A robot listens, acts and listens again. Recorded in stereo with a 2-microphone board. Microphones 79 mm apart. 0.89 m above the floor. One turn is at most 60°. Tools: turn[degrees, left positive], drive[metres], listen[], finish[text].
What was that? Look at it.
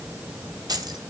Thought: The keys jangling: about 60° right or 120° right.
Action: turn[-60]
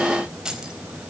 Thought: So it is at 10° right.
Action: turn[-10]
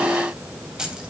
Thought: The keys jangling is now 10° right.
Action: turn[-10]
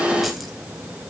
Action: listen[]
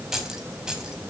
Thought: The keys jangling is now 10° right.
Action: turn[-10]
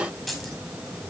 Action: finish[Facing the keys jangling, over 4 m away.]